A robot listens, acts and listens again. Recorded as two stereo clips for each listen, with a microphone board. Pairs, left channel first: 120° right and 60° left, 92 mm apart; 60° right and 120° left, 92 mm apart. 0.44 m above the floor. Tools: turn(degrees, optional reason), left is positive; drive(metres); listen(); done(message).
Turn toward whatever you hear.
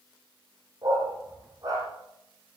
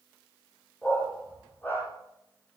turn(degrees=10, reason="The dog barking: 10° left.")
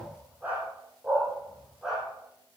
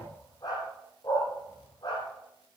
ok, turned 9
turn(degrees=-25, reason="The dog barking is now 25° right.")
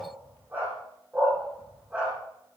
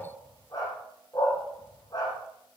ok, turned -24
turn(degrees=-15, reason="The dog barking is now 15° right.")
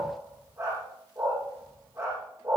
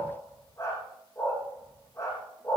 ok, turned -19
done("Found it: a dog barking, straight ahead, over 4 m away.")